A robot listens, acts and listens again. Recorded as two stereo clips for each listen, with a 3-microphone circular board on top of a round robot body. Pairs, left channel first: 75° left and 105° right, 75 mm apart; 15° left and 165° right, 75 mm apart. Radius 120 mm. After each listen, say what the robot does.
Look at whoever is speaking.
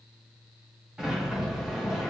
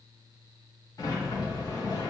Keep listening.
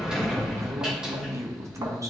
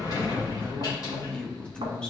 Turn 60° right.
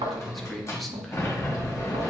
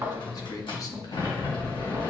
Turn 15° right.
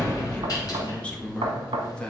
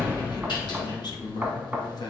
Facing the man speaking, 1 to 2 m away.